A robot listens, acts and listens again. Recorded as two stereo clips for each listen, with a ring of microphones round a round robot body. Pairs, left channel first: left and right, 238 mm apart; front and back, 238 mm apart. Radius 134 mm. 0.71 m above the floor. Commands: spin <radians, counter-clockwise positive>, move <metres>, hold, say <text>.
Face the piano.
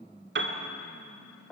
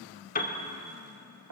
spin -0.96
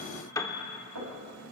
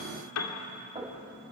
spin 0.26
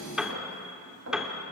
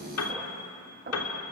say Found it: a piano, straight ahead, 2 to 4 m away.